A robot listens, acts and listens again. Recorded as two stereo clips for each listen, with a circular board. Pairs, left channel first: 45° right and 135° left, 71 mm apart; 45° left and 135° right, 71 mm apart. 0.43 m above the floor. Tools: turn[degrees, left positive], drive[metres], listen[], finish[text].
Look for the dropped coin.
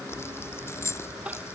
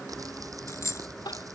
Action: finish[Found it: a dropped coin, straight ahead.]